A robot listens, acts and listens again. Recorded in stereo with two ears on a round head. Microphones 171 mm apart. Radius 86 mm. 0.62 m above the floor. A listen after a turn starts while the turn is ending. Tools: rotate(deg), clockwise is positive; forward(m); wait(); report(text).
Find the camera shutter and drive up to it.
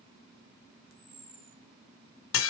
rotate(15)
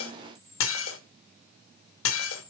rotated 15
forward(1.0)
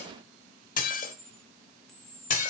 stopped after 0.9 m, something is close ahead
report("Arrived at the camera shutter, straight ahead.")